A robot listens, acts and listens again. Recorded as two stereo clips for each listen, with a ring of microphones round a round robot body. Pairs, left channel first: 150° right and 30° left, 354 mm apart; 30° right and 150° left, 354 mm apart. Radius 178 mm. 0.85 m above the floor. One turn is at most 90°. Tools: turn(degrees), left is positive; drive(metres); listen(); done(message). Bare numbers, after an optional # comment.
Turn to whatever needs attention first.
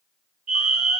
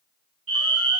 # The fire alarm: 95° left.
turn(90)
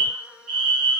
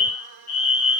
# The fire alarm is now 15° left.
turn(15)
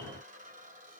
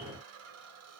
listen()
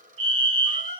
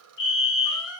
done("Facing the fire alarm, 2 to 4 m away.")